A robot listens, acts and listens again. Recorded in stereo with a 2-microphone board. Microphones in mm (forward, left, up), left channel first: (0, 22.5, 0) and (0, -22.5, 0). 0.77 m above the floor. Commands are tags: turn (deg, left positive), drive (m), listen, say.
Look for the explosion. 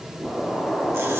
<turn deg="15"/>
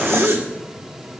<listen/>
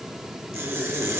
<say>I heard an explosion, but can't make it out now. It was about straight ahead or 150° left.</say>